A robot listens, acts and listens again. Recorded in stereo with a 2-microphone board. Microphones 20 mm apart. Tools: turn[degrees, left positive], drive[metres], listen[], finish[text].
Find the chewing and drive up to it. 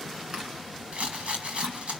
Thought: The chewing: about 55° right or 125° right.
Action: turn[-55]
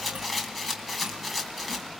Action: listen[]
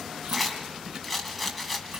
Thought: So it is at 75° right.
Action: turn[-75]
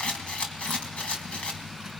Action: listen[]
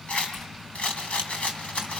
Action: listen[]
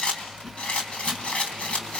Action: finish[I heard chewing from this way, but can't make it out now. I did not reach it.]